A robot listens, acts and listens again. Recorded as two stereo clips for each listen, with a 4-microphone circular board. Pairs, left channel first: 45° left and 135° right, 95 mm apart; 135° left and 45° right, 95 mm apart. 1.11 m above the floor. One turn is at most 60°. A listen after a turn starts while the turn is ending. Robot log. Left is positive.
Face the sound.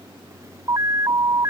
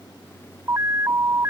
note: The alarm: 95° right.
cmd yaw -60
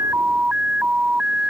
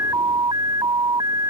note: The alarm is now 60° right.
cmd yaw -60
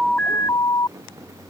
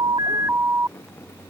note: The alarm is now 10° left.
cmd yaw +10
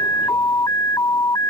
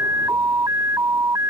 end: Found it: an alarm, straight ahead.